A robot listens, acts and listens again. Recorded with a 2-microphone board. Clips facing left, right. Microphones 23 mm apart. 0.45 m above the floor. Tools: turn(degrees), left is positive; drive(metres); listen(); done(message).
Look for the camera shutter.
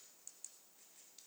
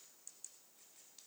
listen()
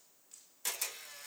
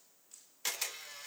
turn(degrees=-30)
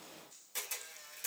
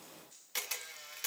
turn(degrees=-115)
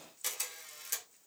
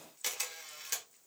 turn(degrees=-25)
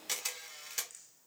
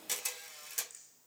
turn(degrees=25)
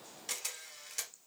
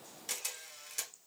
done("Facing the camera shutter.")